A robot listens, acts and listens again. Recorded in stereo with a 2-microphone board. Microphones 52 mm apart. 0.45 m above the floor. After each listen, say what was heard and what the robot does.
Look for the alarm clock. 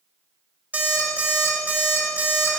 The alarm clock: about 35° right or 145° right. Turn 35° right.
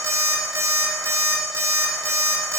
So it is at 105° right. Turn 105° right.
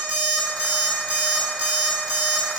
The alarm clock is now 20° right. Turn 20° right.
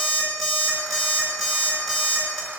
Found it: an alarm clock, straight ahead.